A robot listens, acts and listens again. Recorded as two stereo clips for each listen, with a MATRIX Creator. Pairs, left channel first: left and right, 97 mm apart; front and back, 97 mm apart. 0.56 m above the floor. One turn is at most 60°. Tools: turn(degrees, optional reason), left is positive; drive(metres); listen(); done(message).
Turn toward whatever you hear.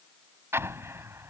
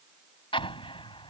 turn(degrees=-25, reason="The explosion: 25° right.")
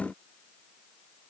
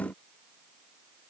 done("I heard an explosion from this way, but can't make it out now.")